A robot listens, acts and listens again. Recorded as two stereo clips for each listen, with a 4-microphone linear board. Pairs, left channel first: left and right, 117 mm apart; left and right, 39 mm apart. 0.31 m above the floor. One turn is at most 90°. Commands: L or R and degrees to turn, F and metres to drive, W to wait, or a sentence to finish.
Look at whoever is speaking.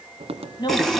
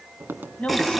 L40
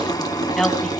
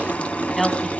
Found it: a woman speaking, straight ahead, 2 to 4 m away.